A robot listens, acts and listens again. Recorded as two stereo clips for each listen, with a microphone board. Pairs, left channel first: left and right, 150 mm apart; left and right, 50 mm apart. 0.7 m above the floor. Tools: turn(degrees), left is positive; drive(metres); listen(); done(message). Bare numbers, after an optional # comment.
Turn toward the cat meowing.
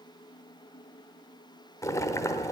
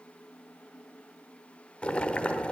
listen()
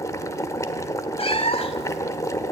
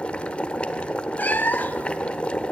# The cat meowing: about 40° left or 140° left.
turn(40)
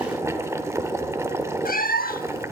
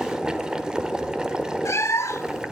# So it is at 100° left.
turn(100)
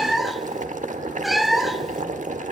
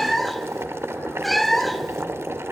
done("Found it: a cat meowing, straight ahead.")